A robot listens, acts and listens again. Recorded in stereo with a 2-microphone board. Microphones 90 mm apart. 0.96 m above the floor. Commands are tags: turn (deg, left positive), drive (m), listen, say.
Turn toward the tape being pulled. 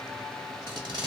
<turn deg="-65"/>
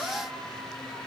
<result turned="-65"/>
<listen/>
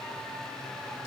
<listen/>
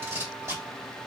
<turn deg="-35"/>
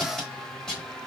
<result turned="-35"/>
<say>Found it: tape being pulled, straight ahead, 1 to 2 m away.</say>